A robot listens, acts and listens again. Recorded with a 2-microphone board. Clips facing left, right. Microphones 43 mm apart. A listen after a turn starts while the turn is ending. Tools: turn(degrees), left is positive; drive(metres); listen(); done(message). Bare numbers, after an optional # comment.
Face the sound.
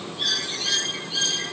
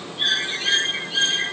# The bird: about 35° right or 145° right.
turn(-35)
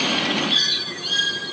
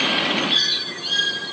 done("Found it: a bird, straight ahead.")